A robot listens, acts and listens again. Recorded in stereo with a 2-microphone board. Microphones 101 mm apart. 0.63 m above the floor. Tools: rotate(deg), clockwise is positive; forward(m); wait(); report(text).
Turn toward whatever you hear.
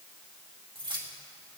rotate(60)
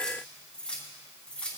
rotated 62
rotate(-10)
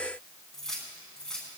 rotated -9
report("Found it: keys jangling, straight ahead, over 4 m away.")